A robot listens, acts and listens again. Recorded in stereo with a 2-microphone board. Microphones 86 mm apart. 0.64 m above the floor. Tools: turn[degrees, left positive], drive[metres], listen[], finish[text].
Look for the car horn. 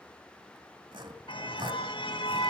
Action: turn[90]
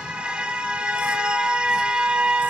Thought: So it is at 10° right.
Action: turn[-10]
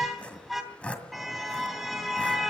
Action: finish[Found it: a car horn, straight ahead.]